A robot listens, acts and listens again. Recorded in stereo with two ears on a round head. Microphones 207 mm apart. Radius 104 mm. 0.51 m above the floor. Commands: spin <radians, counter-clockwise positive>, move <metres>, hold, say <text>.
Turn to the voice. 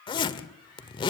hold
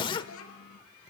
spin 1.13
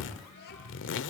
hold
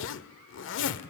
hold
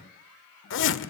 say I heard a child speaking, but can't make it out now. It was about straight ahead or 50° left.